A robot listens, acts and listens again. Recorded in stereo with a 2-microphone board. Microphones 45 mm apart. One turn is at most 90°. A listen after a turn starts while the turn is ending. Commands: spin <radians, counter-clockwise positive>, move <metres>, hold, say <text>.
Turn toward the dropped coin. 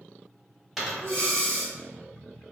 spin 0.52
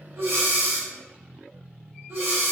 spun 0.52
hold
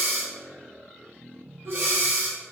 say I heard a dropped coin, but can't make it out now. It was about 30° right or 150° left.